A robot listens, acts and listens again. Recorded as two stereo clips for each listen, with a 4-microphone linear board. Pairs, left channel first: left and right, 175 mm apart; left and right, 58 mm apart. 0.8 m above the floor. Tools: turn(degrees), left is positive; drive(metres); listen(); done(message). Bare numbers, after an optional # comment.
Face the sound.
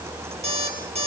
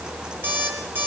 # The alarm clock: about 35° right or 145° right.
turn(-35)
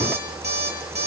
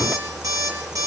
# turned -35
# So it is at 105° right.
turn(-105)
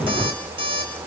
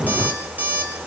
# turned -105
# The alarm clock is now 30° right.
turn(-30)
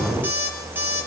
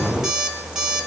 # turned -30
# The alarm clock is now 10° right.
turn(-10)
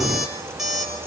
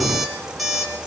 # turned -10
done("Facing the alarm clock.")